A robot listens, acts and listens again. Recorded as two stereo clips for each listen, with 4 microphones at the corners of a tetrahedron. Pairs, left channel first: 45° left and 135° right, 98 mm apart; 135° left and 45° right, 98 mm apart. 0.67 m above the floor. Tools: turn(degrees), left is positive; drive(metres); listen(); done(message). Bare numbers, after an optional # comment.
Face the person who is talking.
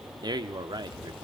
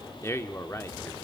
# The man speaking: 165° right.
turn(-165)
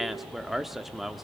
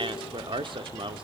# The man speaking is now 45° right.
turn(-45)
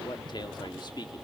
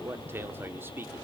# The man speaking is now 15° left.
turn(15)
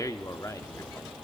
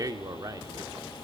done("Found it: a man speaking, straight ahead.")